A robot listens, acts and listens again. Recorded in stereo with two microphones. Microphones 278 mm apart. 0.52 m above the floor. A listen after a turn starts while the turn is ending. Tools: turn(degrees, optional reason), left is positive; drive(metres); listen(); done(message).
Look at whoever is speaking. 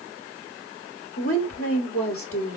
turn(degrees=50, reason="The woman speaking: about 50° left or 130° left.")
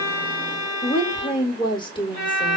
turn(degrees=20, reason="So it is at 20° left.")
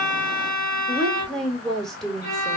done("Facing the woman speaking.")